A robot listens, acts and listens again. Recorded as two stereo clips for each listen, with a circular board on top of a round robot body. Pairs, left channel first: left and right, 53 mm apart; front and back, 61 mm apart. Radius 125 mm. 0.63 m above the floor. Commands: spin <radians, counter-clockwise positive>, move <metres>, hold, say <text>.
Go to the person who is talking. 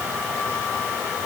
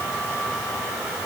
hold
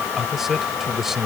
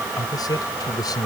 move 1.0
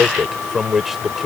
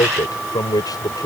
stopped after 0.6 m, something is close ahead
say Something is in my way. I am facing the man speaking but have not reached it.